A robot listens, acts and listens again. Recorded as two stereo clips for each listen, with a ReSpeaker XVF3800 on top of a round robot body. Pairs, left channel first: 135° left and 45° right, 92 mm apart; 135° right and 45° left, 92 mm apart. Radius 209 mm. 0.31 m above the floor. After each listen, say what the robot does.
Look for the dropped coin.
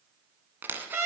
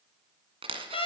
Turn 25° left.
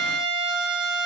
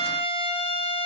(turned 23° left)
Facing where the dropped coin came from. I can't hear it now.